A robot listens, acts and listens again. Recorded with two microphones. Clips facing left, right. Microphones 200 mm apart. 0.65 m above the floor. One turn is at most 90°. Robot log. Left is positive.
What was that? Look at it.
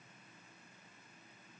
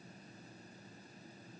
cmd idle
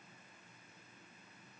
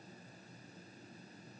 cmd idle
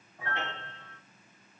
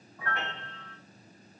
note: The piano: about 25° left or 155° left.
cmd yaw +25
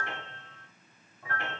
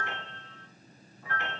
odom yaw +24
note: So it is at 130° left.
cmd yaw +90
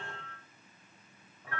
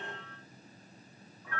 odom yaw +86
note: The piano is now 45° left.
cmd yaw +45
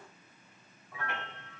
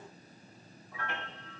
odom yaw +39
end: Facing the piano.